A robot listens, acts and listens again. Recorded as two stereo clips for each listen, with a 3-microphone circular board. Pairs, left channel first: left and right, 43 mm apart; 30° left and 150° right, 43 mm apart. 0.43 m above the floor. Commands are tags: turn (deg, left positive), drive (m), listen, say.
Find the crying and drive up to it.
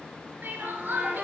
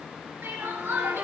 <turn deg="-130"/>
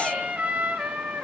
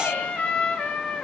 <listen/>
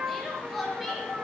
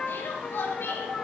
<drive m="1.0"/>
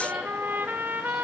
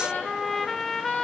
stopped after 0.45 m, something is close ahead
<listen/>
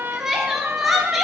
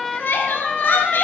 <say>Blocked. The crying is further on, straight ahead.</say>